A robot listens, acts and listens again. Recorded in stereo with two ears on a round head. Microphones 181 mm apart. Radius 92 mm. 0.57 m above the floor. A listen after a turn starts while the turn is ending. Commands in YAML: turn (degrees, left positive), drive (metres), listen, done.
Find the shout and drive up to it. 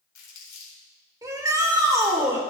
turn: -15
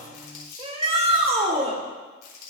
turn: -150
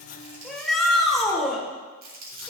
drive: 1.0
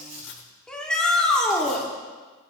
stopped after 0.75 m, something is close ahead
done: "I am next to the shout."